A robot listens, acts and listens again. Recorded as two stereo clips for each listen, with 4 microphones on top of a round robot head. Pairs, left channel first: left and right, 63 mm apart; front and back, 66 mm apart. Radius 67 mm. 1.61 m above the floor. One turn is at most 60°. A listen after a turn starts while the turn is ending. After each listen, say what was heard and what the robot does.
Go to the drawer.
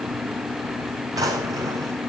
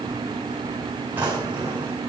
The drawer: 115° right. Turn 60° right.
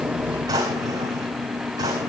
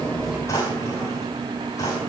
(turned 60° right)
The drawer is now 55° right. Turn 55° right.
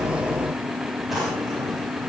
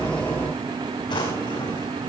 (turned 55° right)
Drive 1.0 m forward.
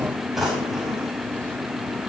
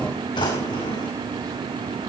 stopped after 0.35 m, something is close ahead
Something is in my way. I am facing the drawer but have not reached it.